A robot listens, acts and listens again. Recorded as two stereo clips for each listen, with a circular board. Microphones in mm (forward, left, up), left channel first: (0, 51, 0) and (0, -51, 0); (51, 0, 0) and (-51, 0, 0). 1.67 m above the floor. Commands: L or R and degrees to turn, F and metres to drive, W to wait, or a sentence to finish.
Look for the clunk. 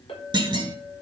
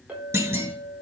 R120
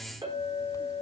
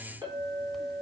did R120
I heard a clunk from this way, but can't make it out now.